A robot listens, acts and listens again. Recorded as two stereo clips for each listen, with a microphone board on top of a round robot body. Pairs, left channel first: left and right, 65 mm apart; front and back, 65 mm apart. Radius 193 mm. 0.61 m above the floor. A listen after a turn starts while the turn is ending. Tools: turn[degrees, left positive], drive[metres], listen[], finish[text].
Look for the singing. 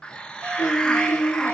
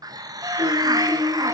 Thought: The singing: 90° left.
Action: turn[90]
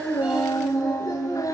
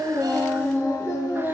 Thought: The singing is now 50° left.
Action: turn[50]
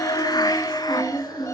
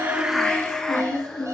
Thought: The singing is now 15° left.
Action: turn[15]
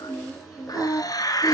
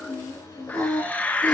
Action: finish[Found it: singing, straight ahead, over 4 m away.]